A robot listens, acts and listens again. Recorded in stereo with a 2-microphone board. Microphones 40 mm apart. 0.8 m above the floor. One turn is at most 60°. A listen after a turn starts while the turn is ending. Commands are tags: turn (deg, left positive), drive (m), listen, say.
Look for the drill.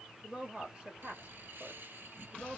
<listen/>
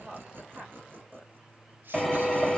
<turn deg="-30"/>
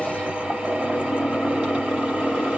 <turn deg="-60"/>
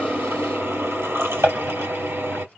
<turn deg="-60"/>
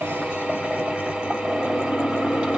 <turn deg="-25"/>
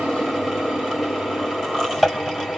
<say>Facing the drill.</say>